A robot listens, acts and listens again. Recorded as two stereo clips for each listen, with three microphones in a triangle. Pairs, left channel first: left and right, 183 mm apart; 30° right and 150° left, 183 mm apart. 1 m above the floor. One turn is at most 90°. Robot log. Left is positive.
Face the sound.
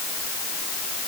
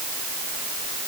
cmd idle
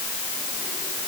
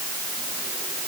cmd idle
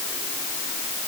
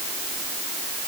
end: I can't make out anything.